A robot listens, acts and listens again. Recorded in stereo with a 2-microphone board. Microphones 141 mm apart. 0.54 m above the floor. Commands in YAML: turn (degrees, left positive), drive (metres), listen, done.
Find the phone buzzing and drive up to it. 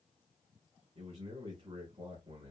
listen: true
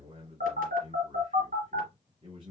turn: -90
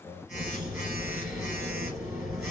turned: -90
drive: 1.0
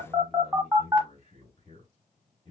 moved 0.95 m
turn: -10
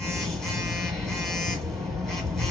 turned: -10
drive: 1.0
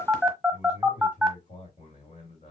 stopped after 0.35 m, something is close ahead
done: "I am next to the phone buzzing."